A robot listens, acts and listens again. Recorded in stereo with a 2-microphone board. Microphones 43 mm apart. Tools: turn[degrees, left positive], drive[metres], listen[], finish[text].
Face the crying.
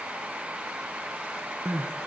Action: turn[-90]
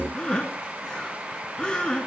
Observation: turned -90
Thought: So it is at 20° left.
Action: turn[20]
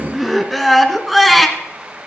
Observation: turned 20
Action: finish[Found it: crying, straight ahead, 1 to 2 m away.]